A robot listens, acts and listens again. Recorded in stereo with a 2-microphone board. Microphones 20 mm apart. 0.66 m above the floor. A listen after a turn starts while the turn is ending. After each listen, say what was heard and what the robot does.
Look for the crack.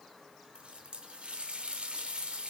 Keep listening.
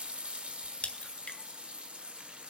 Turn 90° left.
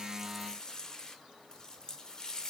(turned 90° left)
Facing where the crack came from. I can't hear it now.